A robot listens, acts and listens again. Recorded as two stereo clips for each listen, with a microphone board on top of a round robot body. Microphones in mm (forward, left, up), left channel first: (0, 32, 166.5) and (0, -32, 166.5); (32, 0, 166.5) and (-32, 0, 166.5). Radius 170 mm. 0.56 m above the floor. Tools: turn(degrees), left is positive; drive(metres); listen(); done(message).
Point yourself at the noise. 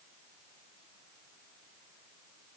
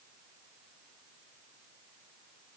listen()
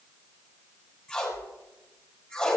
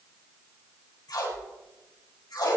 turn(degrees=10)
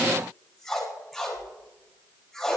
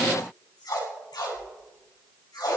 done("Found it: tape being pulled, straight ahead.")